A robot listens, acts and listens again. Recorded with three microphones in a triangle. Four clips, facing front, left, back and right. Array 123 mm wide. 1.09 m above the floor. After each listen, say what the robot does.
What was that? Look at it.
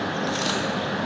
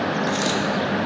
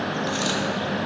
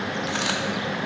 Turn 95° right.
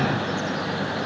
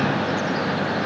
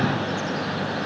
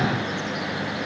Facing where the dropped coin came from. I can't hear it now.